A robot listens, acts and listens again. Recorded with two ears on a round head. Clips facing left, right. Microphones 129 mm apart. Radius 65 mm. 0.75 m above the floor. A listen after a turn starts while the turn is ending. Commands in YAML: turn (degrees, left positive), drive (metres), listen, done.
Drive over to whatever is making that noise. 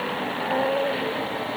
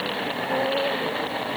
listen: true
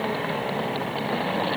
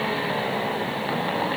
listen: true
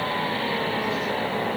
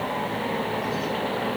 done: "I can't make out anything to turn to."